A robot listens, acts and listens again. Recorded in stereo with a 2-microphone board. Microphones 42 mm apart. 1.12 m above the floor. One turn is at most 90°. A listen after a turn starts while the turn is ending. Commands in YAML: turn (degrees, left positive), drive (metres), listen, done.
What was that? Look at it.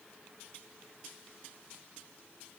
listen: true
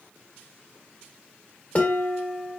turn: 35
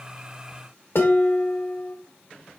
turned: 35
turn: 90
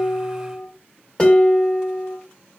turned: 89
turn: 25
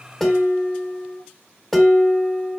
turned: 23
done: "Facing the dishes clattering."